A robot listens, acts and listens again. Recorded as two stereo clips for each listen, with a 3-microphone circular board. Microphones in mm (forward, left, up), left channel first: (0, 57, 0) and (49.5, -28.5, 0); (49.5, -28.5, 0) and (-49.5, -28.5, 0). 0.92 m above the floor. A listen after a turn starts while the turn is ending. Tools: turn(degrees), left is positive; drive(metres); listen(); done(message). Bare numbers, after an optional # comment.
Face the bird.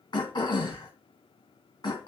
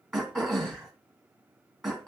listen()
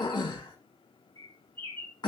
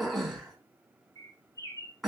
# The bird: 45° right.
turn(-45)
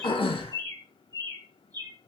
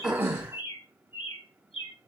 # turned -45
# The bird is now 15° right.
turn(-15)
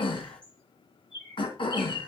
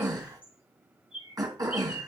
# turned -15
done("Facing the bird, 2 to 4 m away.")